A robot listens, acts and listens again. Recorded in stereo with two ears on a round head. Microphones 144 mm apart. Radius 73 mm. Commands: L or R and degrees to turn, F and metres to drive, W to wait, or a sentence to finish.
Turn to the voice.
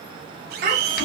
R60
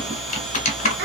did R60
W
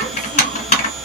W
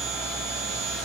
I heard a child speaking, but can't make it out now. It was about straight ahead or 60° right.